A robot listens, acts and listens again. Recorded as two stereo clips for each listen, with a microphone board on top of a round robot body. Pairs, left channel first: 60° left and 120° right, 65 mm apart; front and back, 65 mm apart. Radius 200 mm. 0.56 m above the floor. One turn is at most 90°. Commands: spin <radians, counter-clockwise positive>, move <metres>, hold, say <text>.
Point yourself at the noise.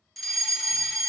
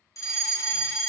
spin -0.44
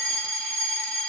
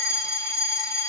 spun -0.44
spin -0.17
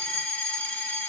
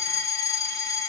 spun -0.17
say Found it: a fire alarm, straight ahead.